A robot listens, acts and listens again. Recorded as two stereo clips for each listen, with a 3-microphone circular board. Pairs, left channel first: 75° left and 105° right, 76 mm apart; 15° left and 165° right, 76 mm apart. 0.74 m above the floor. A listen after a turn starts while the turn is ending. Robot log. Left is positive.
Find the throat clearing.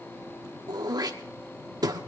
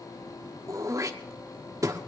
note: The throat clearing: 125° right.
cmd yaw -125
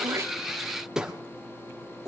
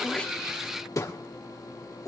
note: The throat clearing is now 25° right.
cmd yaw -25
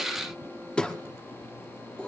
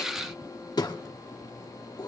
end: Found it: throat clearing, straight ahead, 1 to 2 m away.